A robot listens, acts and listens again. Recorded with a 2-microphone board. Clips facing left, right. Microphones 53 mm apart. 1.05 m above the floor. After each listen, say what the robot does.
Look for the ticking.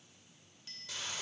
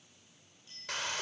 Keep listening.
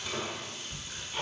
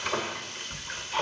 Turn 65° right.
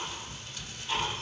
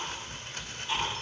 Facing the ticking, over 4 m away.